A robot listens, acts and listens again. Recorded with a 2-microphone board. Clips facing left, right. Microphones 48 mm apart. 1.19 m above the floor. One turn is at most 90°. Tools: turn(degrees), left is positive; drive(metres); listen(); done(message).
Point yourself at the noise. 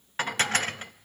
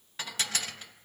turn(degrees=45)
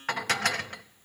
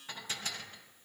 turn(degrees=90)
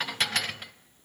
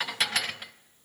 done("Found it: dishes clattering, straight ahead.")